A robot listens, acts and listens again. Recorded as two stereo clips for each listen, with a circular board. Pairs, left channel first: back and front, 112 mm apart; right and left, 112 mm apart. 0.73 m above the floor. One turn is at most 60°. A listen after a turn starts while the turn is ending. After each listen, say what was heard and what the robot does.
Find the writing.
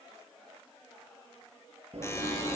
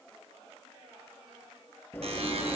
The writing: 20° right. Turn 20° right.
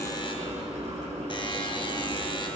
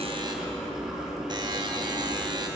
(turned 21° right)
Facing the writing.